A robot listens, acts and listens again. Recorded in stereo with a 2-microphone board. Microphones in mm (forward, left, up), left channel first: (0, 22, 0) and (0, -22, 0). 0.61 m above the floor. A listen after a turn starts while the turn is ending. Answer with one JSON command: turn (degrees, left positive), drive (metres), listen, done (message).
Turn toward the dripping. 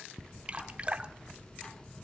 {"turn": -25}
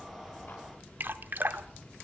{"turn": -120}
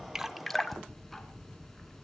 {"done": "Facing the dripping, 1 to 2 m away."}